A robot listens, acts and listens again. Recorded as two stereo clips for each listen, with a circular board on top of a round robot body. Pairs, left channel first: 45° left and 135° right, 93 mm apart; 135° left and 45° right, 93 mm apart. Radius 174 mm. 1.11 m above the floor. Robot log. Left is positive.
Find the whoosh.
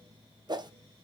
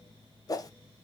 note: The whoosh: 175° right.
cmd yaw -175
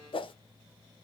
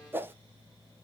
note: The whoosh is now 25° left.
cmd yaw +25
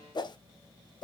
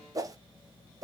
end: Found it: a whoosh, straight ahead.